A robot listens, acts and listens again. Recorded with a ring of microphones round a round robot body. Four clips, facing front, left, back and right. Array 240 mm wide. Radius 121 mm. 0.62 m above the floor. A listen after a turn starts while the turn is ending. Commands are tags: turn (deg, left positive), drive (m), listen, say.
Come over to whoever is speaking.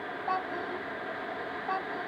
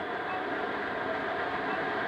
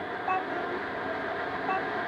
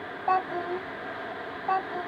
<turn deg="-100"/>
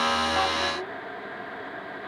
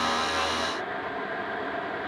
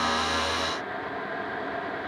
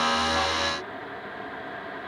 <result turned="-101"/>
<listen/>
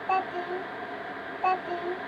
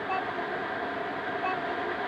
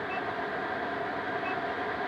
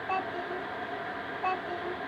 <drive m="1.0"/>
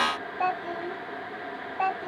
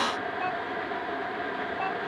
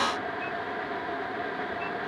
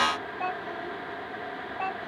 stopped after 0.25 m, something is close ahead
<say>Something is in my way. I am facing the child speaking but have not reached it.</say>